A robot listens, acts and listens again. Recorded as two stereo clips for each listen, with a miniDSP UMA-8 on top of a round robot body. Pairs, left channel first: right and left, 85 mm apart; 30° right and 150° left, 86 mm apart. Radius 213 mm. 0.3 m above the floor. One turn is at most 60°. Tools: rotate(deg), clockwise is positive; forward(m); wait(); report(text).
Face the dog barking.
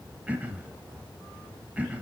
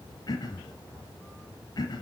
wait()
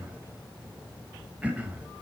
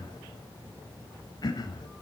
wait()
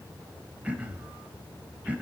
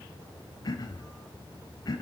report("I can't make out a dog barking, only throat clearing.")